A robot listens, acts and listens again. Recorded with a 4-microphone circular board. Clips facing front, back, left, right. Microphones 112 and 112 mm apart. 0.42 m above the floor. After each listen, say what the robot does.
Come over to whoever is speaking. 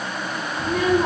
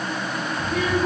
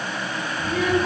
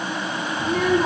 Turn 50° right.
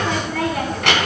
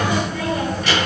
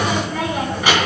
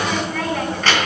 Turn 15° left.
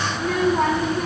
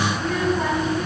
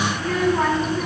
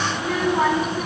Drive 1.0 m forward.
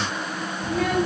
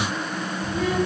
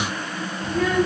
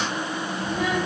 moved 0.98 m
Turn 10° right.
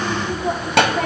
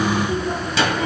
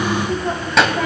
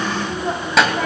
Drive 1.0 m forward.
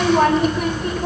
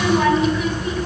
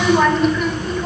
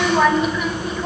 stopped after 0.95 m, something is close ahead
Arrived at the child speaking, straight ahead.